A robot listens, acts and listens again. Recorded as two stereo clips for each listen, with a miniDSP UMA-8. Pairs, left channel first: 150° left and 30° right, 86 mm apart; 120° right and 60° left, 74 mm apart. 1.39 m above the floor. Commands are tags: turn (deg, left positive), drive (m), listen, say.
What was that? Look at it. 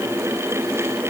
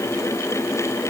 <listen/>
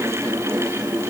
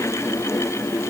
<listen/>
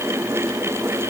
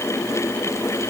<say>I can't make out anything to turn to.</say>